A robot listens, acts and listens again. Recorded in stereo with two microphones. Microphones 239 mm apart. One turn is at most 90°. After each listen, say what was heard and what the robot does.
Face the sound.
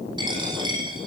The dropped coin: about 20° right or 160° right. Turn 20° right.
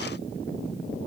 Keep listening.
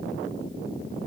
I heard a dropped coin, but can't make it out now. It was about straight ahead or 140° right.